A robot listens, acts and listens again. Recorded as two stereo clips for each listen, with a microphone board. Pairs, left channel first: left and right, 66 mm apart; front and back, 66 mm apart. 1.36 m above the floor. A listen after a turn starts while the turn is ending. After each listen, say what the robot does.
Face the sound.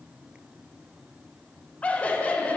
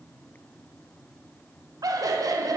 Turn 160° left.
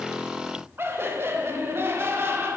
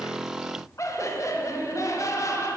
Turn 35° right.
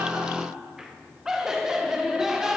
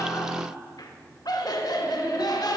Turn 10° right.
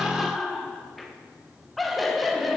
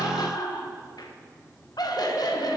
Found it: laughter, straight ahead.